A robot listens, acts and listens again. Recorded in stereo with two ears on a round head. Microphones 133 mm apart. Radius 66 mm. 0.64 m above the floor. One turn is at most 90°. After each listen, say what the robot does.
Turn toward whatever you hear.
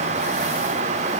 Keep listening.
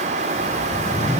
Turn 20° left.
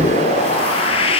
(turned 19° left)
Turn 90° left.
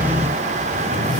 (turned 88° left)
Turn 50° left.
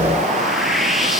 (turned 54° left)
Facing the whoosh.